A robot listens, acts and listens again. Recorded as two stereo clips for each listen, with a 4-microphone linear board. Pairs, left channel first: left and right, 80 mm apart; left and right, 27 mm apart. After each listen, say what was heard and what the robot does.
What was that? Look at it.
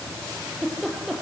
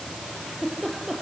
Turn 30° left.
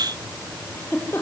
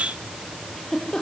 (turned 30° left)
So it is at 150° left. Turn 150° left.
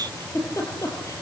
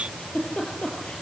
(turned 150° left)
The giggle is now 45° left. Turn 45° left.
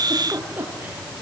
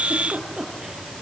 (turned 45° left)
The giggle is now 25° right. Turn 25° right.
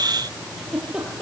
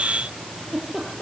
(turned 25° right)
Facing the giggle, over 4 m away.